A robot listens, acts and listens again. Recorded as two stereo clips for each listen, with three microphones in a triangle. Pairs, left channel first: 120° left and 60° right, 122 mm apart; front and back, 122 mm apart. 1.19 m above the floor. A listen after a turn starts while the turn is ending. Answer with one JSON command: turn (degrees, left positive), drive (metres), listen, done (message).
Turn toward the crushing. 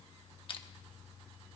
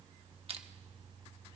{"turn": 160}
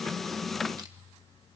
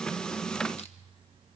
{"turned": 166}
{"turn": -10}
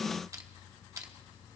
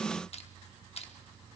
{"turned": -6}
{"done": "Found it: crushing, straight ahead."}